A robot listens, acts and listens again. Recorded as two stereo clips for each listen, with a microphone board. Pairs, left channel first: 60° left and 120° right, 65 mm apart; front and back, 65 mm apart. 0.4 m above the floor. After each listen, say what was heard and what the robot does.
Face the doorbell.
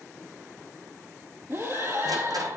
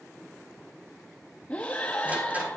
Keep listening.
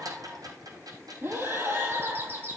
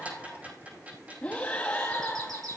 The doorbell: 175° right. Turn 175° right.
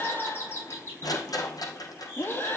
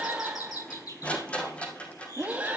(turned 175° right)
The doorbell is now 10° left. Turn 10° left.
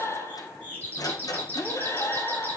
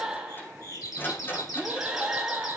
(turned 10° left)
Facing the doorbell, over 4 m away.